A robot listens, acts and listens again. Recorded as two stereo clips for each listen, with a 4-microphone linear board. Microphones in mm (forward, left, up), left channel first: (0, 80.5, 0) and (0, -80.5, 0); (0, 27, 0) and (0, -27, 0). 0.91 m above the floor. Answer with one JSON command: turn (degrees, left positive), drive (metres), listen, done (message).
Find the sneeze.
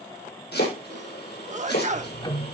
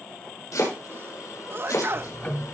{"turn": -45}
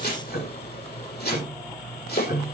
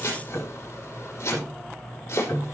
{"listen": true}
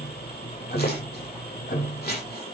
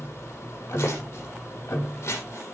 {"done": "I heard a sneeze, but can't make it out now. It was about straight ahead or 90° right."}